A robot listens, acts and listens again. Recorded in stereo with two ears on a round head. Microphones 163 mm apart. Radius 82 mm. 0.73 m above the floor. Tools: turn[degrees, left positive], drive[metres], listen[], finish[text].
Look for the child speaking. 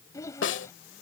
Thought: The child speaking: about 20° left or 160° left.
Action: turn[20]
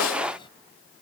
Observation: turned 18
Thought: The child speaking: about 30° left or 150° left.
Action: turn[30]
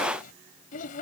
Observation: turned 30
Thought: So it is at 130° left.
Action: turn[130]
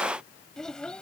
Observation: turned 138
Action: finish[Found it: a child speaking, straight ahead.]